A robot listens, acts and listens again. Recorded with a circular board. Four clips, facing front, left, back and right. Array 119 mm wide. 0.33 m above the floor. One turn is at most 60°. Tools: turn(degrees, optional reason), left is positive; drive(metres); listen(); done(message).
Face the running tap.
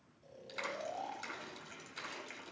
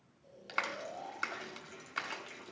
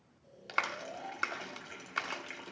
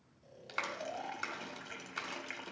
turn(degrees=-60, reason="The running tap: 110° right.")
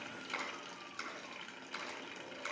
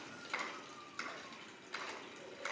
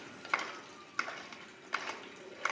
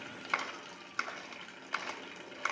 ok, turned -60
turn(degrees=-50, reason="The running tap is now 50° right.")
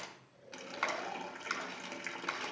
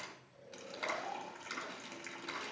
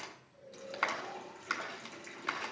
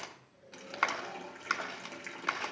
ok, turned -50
turn(degrees=-15, reason="The running tap is now 15° right.")
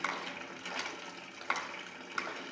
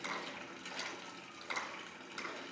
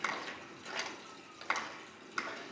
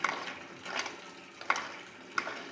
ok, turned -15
done("Facing the running tap.")